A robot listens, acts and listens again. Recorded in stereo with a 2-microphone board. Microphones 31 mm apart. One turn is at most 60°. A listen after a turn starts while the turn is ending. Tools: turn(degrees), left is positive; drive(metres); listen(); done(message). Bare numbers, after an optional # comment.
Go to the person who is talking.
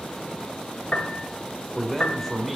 turn(30)
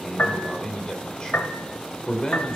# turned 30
# So it is at 145° left.
turn(60)
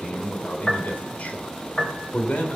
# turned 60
# The man speaking is now 75° left.
turn(60)
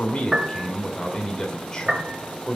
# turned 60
# The man speaking is now 25° left.
turn(25)
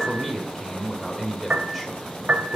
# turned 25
drive(1.0)
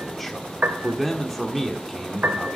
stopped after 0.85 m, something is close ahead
done("Arrived at the man speaking, straight ahead.")